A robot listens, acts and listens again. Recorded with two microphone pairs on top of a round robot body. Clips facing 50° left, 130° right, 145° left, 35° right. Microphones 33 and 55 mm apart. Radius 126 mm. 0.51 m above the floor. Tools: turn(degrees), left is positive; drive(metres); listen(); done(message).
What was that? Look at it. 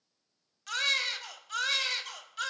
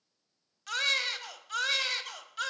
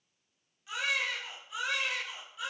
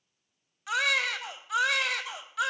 turn(degrees=-45)
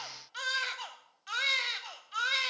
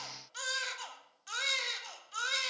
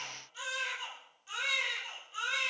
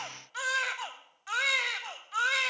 turn(degrees=-20)
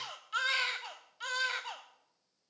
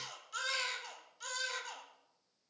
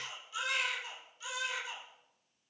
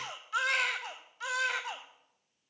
done("Found it: a baby crying, straight ahead, 1 to 2 m away.")